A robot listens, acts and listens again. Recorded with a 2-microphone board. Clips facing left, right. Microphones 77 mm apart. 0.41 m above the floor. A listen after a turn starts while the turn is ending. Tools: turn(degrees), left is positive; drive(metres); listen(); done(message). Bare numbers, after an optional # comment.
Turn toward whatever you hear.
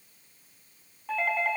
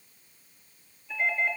# The doorbell: about 70° left or 110° left.
turn(70)
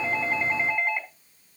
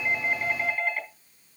# So it is at 20° left.
turn(20)
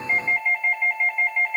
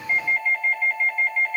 done("Facing the doorbell.")